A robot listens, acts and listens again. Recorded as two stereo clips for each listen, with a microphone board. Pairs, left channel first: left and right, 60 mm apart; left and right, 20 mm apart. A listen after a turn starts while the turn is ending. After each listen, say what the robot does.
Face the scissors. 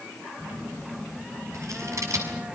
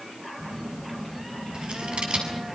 Turn 65° right.
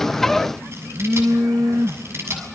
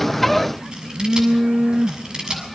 Turn 50° right.
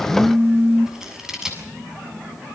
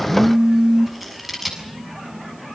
Turn 10° right.
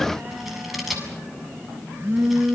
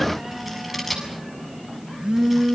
Facing the scissors, over 4 m away.